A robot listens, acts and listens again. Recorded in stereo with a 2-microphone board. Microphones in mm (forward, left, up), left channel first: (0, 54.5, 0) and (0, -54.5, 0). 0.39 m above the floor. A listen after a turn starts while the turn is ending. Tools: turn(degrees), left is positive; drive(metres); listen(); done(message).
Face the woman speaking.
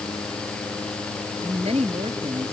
turn(degrees=-75)
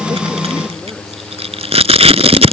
listen()
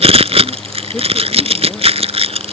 listen()
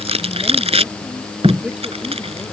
done("I heard a woman speaking, but can't make it out now. It was about straight ahead or 30° right.")